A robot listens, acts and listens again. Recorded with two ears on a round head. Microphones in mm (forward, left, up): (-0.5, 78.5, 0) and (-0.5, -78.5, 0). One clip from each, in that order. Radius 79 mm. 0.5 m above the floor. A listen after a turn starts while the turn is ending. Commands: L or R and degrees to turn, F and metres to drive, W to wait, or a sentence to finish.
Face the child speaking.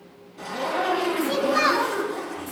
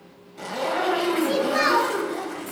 R30
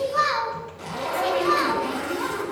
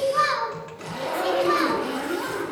L10
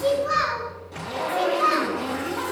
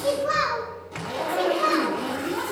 R10
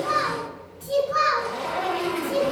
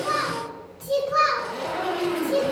Facing the child speaking.